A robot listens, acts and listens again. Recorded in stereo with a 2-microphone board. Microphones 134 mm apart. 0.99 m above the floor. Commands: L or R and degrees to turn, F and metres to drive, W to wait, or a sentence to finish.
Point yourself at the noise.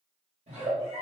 R55
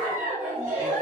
R65
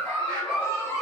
L15
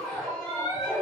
Facing the giggle.